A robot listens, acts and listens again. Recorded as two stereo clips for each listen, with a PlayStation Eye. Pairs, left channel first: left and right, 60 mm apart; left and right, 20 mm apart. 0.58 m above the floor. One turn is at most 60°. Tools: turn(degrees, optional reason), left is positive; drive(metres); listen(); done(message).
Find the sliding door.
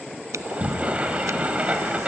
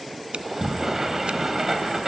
turn(degrees=-20, reason="The sliding door: about 20° right or 160° right.")
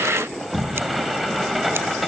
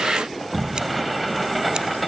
done("Found it: a sliding door, straight ahead, 2 to 4 m away.")